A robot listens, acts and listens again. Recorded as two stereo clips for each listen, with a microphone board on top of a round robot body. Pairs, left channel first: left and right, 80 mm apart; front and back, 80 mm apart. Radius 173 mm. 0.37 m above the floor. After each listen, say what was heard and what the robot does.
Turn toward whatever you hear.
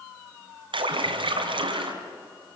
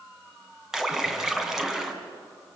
The splash: 95° right. Turn 95° right.
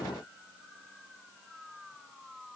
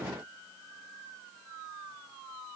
Facing where the splash came from. I can't hear it now.